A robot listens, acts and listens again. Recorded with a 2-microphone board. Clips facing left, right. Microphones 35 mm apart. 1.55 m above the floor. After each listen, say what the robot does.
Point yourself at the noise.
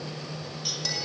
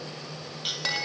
Turn 50° right.
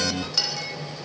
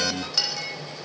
Found it: a clink, straight ahead.